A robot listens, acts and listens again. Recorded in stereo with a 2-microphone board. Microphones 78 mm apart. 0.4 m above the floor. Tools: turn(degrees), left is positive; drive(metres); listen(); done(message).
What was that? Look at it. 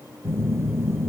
turn(degrees=-35)
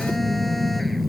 done("Facing the phone buzzing.")